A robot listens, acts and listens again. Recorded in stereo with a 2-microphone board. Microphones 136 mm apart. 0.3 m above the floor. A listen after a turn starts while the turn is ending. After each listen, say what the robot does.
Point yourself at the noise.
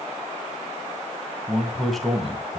Turn 30° left.
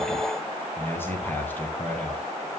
Turn 170° left.
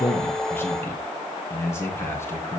Turn 20° left.
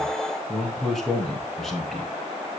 Facing the man speaking, 2 to 4 m away.